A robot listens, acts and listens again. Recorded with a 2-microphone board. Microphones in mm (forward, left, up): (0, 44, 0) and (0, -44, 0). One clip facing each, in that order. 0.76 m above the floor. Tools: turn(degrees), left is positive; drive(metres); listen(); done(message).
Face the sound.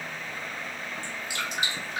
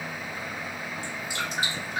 turn(degrees=-35)
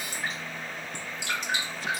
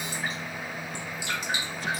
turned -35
done("Found it: dripping, straight ahead, 1 to 2 m away.")